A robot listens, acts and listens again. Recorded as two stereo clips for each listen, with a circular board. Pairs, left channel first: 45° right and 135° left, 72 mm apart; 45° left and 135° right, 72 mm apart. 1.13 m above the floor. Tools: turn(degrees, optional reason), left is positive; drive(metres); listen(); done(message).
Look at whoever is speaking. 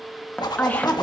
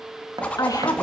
turn(degrees=20, reason="The woman speaking: 20° left.")
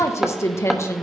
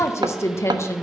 done("Found it: a woman speaking, straight ahead.")